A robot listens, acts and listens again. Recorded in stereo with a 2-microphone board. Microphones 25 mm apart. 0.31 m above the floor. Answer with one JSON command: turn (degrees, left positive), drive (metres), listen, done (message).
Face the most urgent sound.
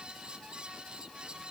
{"listen": true}
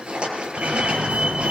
{"turn": -55}
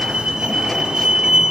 {"turn": -45}
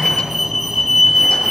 {"done": "Found it: a fire alarm, straight ahead, over 4 m away."}